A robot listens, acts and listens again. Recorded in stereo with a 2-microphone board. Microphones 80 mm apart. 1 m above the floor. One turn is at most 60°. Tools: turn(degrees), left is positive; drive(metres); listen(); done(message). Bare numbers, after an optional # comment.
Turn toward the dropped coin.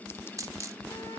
# The dropped coin: about 45° right or 135° right.
turn(-45)
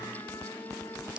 listen()
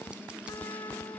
done("I heard a dropped coin, but can't make it out now. It was about straight ahead or 90° right.")